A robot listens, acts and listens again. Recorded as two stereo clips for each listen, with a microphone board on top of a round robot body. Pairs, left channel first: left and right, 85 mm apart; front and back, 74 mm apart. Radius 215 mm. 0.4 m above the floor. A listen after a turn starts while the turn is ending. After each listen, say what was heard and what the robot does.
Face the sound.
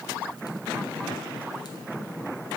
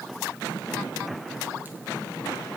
Keep listening.
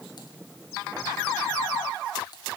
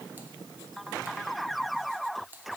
Keep listening.
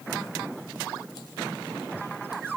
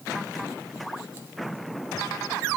I can't make out anything.